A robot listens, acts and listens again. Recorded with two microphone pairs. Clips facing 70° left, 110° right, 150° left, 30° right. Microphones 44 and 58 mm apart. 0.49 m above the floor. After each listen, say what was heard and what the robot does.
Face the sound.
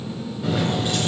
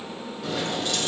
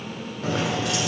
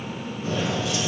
The keys jangling: 140° left. Turn 140° left.
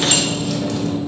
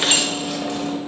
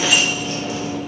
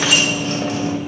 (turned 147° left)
The keys jangling is now 50° right. Turn 50° right.
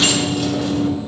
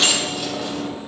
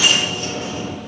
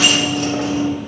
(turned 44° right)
The keys jangling is now 30° right. Turn 30° right.
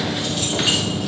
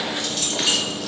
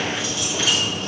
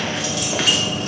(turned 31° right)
The keys jangling is now 10° right. Turn 10° right.
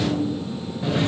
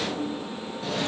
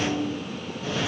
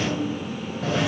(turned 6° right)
Facing the keys jangling.